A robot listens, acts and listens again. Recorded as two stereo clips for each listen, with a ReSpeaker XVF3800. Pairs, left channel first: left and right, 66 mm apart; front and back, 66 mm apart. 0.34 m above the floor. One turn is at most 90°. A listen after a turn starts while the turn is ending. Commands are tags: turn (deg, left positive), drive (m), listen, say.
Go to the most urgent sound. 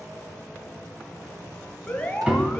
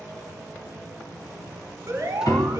<turn deg="90"/>
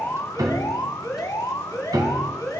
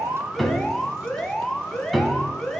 <turn deg="85"/>
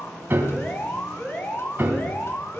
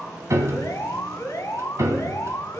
<turn deg="35"/>
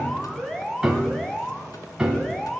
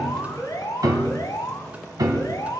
<turn deg="10"/>
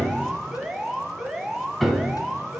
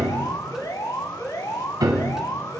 <drive m="1.0"/>
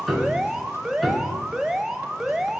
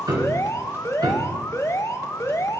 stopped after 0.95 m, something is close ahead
<turn deg="-10"/>
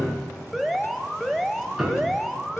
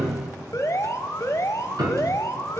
<say>I am next to the alarm.</say>